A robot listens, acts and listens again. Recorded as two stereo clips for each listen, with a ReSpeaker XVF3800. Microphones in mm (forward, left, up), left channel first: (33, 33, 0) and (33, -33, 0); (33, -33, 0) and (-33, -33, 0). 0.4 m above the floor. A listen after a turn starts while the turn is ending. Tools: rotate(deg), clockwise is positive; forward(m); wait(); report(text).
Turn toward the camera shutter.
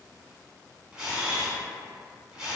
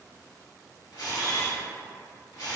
rotate(10)
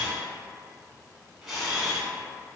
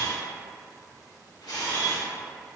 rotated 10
report("Found it: a camera shutter, straight ahead, under 1 m away.")